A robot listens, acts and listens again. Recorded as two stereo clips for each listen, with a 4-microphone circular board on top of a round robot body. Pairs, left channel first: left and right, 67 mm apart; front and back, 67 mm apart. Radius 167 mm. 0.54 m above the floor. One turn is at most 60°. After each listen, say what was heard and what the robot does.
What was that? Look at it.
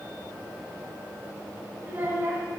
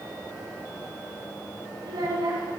The child speaking: 150° right. Turn 60° right.
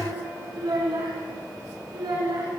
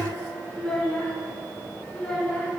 The child speaking is now 75° right. Turn 60° right.
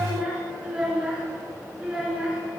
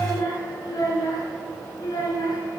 The child speaking is now 10° right. Turn 10° right.
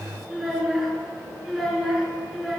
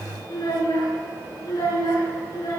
Found it: a child speaking, straight ahead.